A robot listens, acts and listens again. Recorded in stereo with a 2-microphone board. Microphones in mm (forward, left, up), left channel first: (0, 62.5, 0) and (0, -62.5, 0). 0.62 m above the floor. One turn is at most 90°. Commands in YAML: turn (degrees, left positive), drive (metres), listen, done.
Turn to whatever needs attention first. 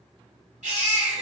turn: -90
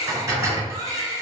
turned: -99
done: "Facing the baby crying."